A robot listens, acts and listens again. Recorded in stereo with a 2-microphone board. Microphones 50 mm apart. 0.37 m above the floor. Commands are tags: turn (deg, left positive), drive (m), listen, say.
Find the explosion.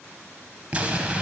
<turn deg="-25"/>
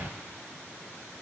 <turn deg="-125"/>
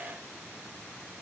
<say>I heard an explosion from this way, but can't make it out now.</say>